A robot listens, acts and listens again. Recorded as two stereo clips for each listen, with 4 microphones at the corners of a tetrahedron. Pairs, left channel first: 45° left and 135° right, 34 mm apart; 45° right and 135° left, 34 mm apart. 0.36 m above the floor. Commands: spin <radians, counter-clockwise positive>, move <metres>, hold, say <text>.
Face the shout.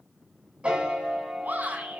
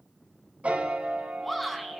spin -2.27
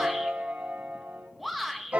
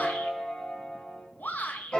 spin -0.79
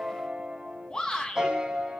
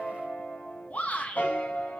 spin -0.26
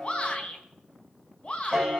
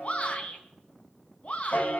say Found it: a shout, straight ahead, 2 to 4 m away.